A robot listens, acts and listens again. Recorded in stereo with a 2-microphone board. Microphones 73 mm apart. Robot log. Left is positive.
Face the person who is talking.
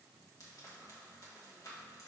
cmd idle
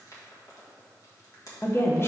note: The woman speaking: about 35° left or 145° left.
cmd yaw +35
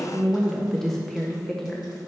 end: Facing the woman speaking.